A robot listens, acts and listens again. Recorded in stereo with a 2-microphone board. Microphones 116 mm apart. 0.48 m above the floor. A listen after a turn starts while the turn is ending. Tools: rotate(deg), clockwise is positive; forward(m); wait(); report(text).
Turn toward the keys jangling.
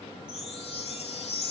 wait()
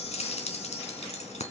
rotate(-90)
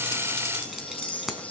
report("Found it: keys jangling, straight ahead, 2 to 4 m away.")